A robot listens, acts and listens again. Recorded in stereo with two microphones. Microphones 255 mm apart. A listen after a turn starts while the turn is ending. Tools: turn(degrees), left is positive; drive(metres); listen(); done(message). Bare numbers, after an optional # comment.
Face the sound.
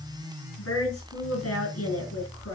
# The woman speaking: about 70° left or 110° left.
turn(70)
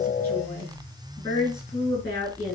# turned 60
# So it is at 10° left.
turn(10)
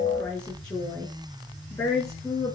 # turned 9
done("Facing the woman speaking.")